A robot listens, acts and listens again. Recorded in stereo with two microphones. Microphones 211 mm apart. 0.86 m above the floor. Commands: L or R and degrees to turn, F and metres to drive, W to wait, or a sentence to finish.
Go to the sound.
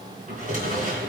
R40
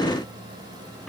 W
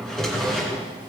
F1.0
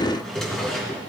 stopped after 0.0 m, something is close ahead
Blocked. The drawer is further on, straight ahead.